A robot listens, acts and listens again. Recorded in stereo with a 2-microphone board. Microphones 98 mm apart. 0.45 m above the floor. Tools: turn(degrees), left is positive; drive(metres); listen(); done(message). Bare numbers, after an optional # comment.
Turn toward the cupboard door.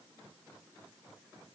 listen()
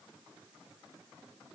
listen()
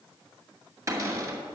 # The cupboard door: about 30° right or 150° right.
turn(-30)
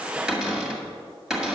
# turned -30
done("Facing the cupboard door.")